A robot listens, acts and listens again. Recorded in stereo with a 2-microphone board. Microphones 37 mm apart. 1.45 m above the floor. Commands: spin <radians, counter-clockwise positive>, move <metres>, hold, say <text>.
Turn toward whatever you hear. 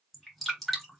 spin 0.52
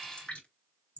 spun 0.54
spin 2.53
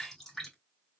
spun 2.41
spin 0.17
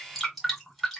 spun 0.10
say Found it: dripping, straight ahead.